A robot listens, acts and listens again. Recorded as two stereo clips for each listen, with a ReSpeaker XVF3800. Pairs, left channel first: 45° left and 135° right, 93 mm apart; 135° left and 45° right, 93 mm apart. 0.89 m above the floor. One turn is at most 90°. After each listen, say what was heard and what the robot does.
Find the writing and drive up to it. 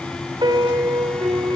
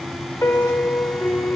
Keep listening.
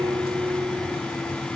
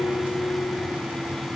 Keep listening.
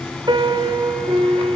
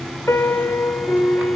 I can't make out writing, only a piano.